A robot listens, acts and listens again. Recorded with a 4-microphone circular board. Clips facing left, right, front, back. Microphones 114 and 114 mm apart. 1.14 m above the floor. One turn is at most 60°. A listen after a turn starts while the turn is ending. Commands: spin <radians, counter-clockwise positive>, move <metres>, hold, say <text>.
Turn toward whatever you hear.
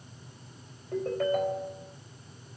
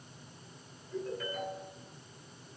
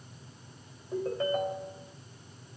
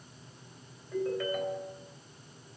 spin 0.96
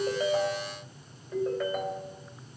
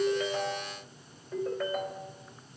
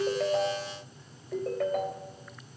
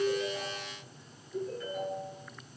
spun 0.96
say Facing the ringtone, 2 to 4 m away.